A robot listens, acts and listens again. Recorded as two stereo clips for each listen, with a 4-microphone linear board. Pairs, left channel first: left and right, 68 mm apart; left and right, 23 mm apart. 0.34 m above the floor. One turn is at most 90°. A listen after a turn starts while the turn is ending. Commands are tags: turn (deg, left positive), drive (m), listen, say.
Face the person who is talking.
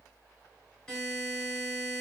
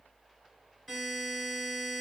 <listen/>
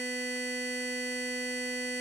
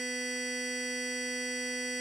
<listen/>
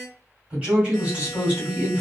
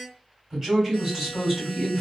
<turn deg="-20"/>
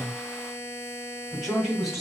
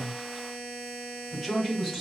<say>Found it: a woman speaking, straight ahead, 1 to 2 m away.</say>